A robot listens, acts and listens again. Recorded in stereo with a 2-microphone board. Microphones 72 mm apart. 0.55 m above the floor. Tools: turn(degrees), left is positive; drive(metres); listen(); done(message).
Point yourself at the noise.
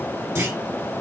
turn(degrees=-35)
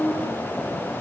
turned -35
listen()
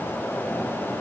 done("I heard a clunk, but can't make it out now. It was about straight ahead or 110° right.")